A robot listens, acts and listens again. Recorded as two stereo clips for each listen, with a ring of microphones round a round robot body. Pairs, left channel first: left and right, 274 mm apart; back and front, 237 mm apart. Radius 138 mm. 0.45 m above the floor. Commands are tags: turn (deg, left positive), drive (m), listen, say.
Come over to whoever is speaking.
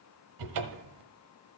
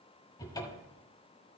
<listen/>
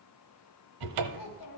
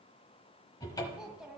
<turn deg="85"/>
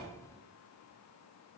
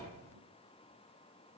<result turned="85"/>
<listen/>
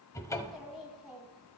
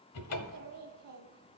<drive m="1.0"/>
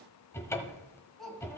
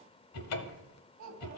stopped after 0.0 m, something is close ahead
<say>Something is in my way. I am facing the child speaking but have not reached it.</say>